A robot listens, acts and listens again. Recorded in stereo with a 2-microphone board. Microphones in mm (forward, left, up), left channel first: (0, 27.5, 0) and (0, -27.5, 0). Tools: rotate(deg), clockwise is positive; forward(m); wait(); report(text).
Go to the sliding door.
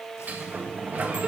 rotate(30)
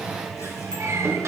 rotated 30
rotate(120)
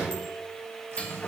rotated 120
rotate(-25)
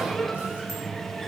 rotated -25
forward(1.0)
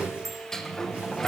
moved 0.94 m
rotate(-10)
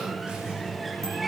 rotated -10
forward(1.0)
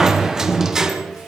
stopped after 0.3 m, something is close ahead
rotate(10)
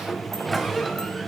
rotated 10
report("Arrived at the sliding door, straight ahead.")